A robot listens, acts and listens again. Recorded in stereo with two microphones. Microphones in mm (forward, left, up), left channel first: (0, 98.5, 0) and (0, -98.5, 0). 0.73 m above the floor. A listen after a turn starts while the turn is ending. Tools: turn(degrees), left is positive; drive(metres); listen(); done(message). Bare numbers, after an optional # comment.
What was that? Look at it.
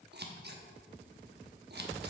# The scissors: about 55° right or 125° right.
turn(-55)
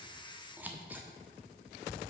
# So it is at 10° right.
turn(-10)
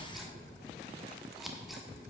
done("Facing the scissors.")